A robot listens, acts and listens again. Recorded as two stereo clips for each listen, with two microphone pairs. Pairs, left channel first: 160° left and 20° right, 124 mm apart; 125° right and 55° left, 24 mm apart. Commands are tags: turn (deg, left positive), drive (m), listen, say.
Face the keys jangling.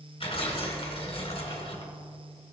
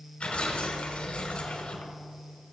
<listen/>
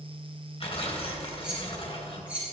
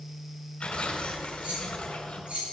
<turn deg="60"/>
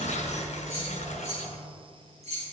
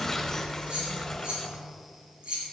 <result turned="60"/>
<turn deg="15"/>
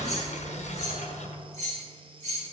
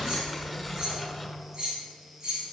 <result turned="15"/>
<say>Found it: keys jangling, straight ahead.</say>